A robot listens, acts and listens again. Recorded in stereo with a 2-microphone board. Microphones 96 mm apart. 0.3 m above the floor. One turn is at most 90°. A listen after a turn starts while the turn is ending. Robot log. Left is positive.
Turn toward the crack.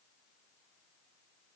cmd idle
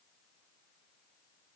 cmd idle
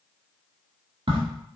note: The crack: about 70° right or 110° right.
cmd yaw -70
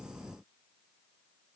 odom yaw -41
cmd idle
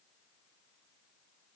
end: I heard a crack, but can't make it out now. It was about 30° right or 70° right.